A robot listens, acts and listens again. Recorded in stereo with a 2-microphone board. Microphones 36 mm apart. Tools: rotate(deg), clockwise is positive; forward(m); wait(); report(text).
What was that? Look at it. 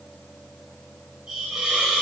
rotate(20)
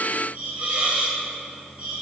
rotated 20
rotate(140)
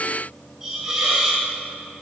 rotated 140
rotate(15)
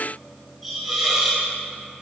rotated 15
rotate(10)
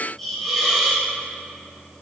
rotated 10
report("Found it: a hiss, straight ahead, 1 to 2 m away.")